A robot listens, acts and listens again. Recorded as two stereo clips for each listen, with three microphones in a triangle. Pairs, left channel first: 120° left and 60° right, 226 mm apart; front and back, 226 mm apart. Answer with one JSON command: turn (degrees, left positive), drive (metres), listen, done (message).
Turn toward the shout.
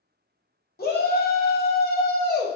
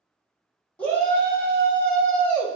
{"turn": 80}
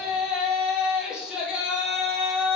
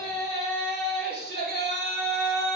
{"turn": 25}
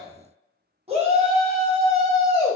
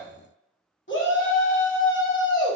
{"done": "Found it: a shout, straight ahead, under 1 m away."}